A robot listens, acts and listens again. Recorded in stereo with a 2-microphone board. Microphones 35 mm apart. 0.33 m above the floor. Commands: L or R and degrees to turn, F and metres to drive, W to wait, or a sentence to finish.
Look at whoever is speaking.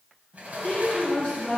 L30
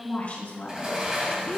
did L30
L150
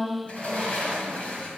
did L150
Found it: a woman speaking, straight ahead.